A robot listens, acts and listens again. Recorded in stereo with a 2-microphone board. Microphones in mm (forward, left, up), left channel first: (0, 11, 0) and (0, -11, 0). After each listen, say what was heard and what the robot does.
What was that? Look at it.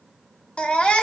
The baby crying: about 60° left or 120° left. Turn 60° left.
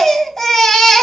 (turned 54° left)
So it is at 20° left. Turn 20° left.
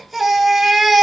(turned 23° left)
Facing the baby crying, 1 to 2 m away.